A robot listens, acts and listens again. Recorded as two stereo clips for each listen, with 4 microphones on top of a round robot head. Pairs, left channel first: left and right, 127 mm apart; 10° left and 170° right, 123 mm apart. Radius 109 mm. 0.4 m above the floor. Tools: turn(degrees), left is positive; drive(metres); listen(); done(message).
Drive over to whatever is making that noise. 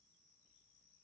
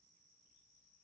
listen()
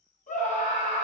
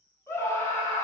turn(degrees=80)
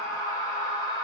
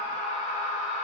turn(degrees=30)
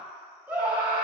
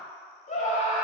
turn(degrees=-10)
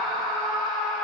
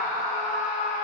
drive(metres=1.0)
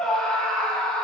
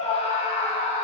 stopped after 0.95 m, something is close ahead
done("I am next to the scream.")